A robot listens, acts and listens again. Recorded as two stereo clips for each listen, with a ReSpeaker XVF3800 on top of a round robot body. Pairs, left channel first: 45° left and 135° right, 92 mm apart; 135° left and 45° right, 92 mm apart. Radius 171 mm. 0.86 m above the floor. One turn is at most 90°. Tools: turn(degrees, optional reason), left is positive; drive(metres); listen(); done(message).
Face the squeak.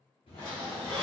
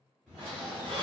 turn(degrees=-35, reason="The squeak: 35° right.")
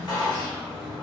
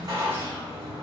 done("Facing the squeak, under 1 m away.")